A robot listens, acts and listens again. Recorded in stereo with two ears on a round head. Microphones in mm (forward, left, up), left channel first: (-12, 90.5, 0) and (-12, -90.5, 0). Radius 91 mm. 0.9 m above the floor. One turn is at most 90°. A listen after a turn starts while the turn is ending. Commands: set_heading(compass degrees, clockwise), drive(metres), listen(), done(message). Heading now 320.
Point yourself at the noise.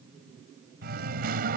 set_heading(10)
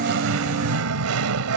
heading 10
set_heading(95)
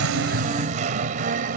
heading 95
set_heading(135)
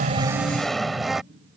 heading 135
done("Facing the singing.")